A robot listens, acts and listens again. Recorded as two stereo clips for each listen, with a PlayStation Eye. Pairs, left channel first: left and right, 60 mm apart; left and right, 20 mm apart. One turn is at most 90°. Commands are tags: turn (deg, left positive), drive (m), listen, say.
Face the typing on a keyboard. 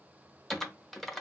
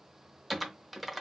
<turn deg="30"/>
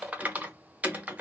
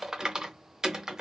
<turn deg="-25"/>
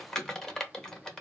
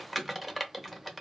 <turn deg="10"/>
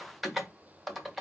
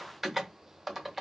<say>Facing the typing on a keyboard, under 1 m away.</say>